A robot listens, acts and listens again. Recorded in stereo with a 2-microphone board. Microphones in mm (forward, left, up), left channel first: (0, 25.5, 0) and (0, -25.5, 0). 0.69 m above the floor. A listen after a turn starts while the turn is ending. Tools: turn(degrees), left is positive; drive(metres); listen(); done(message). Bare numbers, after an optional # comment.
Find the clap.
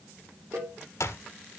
# The clap: about 75° left or 105° left.
turn(75)
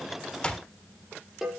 # So it is at 20° left.
turn(20)
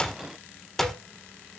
# The clap is now 10° left.
turn(10)
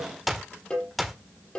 done("Found it: a clap, straight ahead, 1 to 2 m away.")